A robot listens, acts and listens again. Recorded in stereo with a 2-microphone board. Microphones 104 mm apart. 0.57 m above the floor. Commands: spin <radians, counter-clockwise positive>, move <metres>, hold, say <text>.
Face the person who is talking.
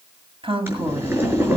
spin -1.05
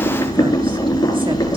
hold
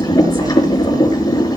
hold
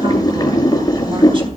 say I heard a woman speaking, but can't make it out now. It was about straight ahead or 60° right.